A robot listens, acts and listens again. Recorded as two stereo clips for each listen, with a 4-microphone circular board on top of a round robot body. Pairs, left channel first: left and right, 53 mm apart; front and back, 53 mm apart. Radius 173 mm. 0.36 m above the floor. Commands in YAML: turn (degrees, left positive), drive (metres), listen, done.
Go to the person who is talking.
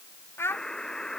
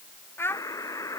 turn: 45
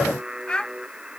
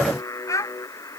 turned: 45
turn: 15
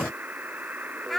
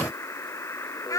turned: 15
drive: 1.0
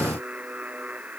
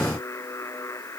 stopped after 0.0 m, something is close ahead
listen: true
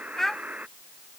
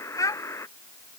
done: "Blocked. The child speaking is further on, straight ahead."